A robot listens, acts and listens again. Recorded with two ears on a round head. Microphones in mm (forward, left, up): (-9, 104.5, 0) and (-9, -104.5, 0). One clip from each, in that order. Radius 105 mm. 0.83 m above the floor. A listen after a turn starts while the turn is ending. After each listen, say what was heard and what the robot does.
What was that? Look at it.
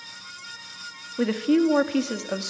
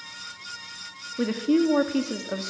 Turn 30° left.
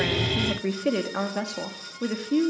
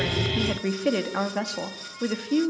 So it is at 15° right. Turn 15° right.
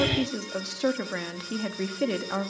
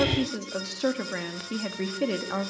Found it: a woman speaking, straight ahead, 1 to 2 m away.